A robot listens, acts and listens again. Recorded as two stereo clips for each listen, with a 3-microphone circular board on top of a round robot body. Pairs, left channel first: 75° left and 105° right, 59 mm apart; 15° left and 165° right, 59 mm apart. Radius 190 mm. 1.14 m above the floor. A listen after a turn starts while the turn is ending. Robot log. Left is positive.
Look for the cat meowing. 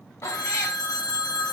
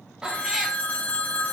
note: The cat meowing: 115° left.
cmd yaw +115
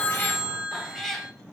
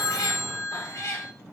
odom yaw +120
note: The cat meowing is now 10° right.
cmd yaw -10
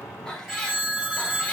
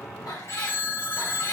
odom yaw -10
end: Found it: a cat meowing, straight ahead.